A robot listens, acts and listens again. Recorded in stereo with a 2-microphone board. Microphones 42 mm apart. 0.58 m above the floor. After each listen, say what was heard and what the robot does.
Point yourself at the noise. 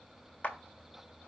The clap: about 35° left or 145° left. Turn 35° left.
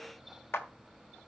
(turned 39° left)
So it is at 105° left. Turn 105° left.
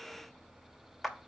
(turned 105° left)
Found it: a clap, straight ahead, 1 to 2 m away.